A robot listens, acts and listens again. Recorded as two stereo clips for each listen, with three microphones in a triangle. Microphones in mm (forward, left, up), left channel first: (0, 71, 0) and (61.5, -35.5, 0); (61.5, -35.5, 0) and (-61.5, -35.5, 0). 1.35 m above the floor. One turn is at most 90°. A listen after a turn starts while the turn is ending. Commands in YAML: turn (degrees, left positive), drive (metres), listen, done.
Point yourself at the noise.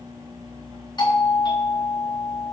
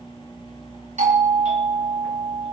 turn: 90
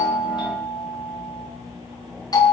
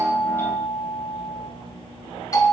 turn: 60
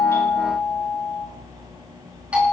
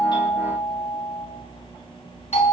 turn: 20
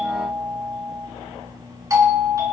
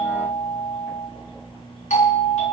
done: "Found it: a doorbell, straight ahead."